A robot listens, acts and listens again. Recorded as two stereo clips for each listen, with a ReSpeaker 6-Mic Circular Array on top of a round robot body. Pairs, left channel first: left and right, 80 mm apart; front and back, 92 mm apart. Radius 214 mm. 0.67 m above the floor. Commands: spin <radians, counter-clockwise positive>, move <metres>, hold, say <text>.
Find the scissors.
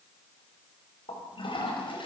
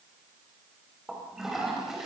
hold
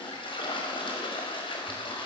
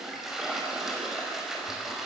hold
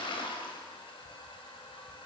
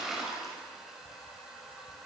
say I can't make out scissors to turn to.